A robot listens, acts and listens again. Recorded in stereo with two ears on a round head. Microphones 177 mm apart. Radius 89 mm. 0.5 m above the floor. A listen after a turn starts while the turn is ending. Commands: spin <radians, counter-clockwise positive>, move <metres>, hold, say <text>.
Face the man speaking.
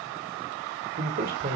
spin -0.79
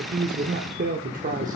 spin -0.70
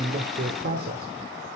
spin -0.87
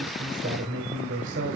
spin -1.22
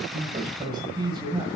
spin -0.44
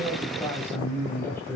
spin 0.17
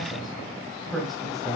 say Found it: a man speaking, straight ahead, 2 to 4 m away.